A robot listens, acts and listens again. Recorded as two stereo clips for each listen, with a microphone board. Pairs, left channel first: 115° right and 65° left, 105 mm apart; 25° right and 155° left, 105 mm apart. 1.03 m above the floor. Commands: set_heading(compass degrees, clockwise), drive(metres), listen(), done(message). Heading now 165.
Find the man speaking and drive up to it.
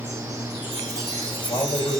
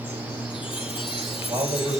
set_heading(320)
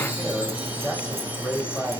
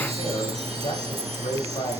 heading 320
set_heading(350)
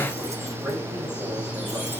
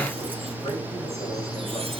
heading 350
set_heading(340)
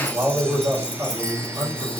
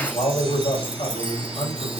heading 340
drive(1.0)
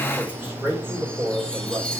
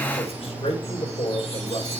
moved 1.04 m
drive(1.0)
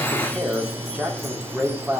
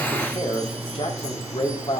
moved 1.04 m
set_heading(350)
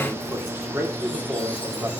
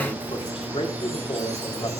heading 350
drive(1.0)
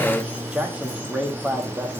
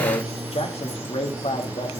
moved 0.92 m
set_heading(0)
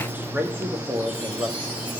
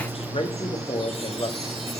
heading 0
drive(1.0)
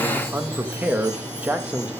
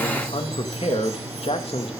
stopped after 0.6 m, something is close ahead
done("I am next to the man speaking.")